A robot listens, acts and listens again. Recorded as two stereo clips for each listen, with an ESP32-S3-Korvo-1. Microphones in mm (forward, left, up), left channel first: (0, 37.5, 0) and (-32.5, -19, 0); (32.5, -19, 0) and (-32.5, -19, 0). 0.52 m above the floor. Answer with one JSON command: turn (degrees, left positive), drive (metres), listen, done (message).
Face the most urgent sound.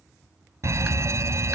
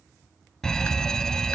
{"turn": -80}
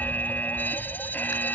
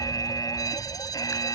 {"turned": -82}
{"done": "Found it: a fire alarm, straight ahead."}